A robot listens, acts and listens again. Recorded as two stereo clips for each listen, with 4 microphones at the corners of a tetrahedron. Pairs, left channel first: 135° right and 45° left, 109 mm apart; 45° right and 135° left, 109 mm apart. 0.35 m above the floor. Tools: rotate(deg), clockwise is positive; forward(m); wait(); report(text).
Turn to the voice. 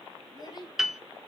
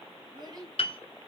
rotate(-180)
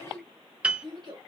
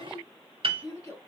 rotate(-10)
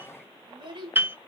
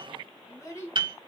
rotate(-15)
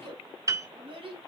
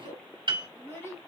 rotate(-20)
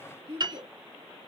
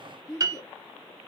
rotate(-10)
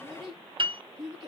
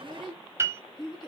report("Found it: a child speaking, straight ahead, 2 to 4 m away.")